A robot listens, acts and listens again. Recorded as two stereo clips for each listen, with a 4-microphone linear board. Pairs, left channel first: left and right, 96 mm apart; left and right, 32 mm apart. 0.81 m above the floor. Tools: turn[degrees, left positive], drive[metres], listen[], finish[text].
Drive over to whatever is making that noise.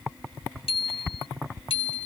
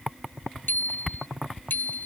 Action: turn[90]
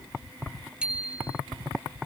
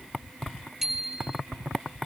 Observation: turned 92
Thought: So it is at 10° right.
Action: turn[-10]
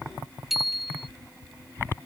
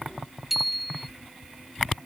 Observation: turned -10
Action: drive[1.0]
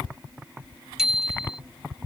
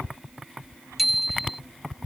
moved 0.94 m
Action: drive[1.0]
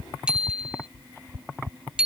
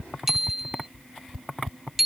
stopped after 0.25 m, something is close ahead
Thought: The bicycle bell is now 10° right.
Action: turn[-10]
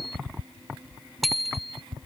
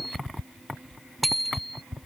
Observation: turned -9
Action: finish[I am next to the bicycle bell.]